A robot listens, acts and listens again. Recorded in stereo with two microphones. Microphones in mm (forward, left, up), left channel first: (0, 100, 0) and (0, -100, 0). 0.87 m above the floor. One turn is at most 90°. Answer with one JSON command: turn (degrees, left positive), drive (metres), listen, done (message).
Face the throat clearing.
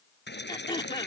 {"turn": 25}
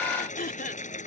{"turn": 90}
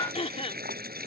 {"turn": 35}
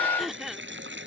{"done": "Found it: throat clearing, straight ahead."}